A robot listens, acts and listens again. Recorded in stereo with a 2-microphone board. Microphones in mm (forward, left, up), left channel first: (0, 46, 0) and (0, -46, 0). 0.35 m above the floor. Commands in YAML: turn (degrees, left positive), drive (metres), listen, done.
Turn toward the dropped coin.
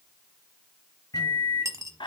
turn: -35
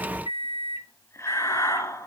listen: true
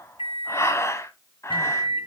done: "I heard a dropped coin, but can't make it out now. It was about straight ahead or 110° right."